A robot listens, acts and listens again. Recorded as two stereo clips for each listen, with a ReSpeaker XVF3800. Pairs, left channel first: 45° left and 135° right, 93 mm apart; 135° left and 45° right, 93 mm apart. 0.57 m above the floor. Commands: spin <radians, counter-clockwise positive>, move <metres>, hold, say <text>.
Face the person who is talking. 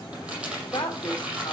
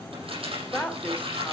spin 1.05
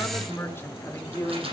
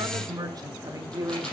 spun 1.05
say Facing the woman speaking, 1 to 2 m away.